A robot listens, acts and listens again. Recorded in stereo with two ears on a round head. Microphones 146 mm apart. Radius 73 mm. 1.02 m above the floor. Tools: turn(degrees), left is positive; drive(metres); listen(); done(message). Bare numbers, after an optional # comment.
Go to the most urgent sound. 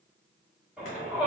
turn(-30)
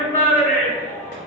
# So it is at 25° left.
turn(25)
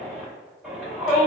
drive(1.0)
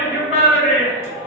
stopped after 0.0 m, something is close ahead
done("Blocked. The shout is further on, straight ahead.")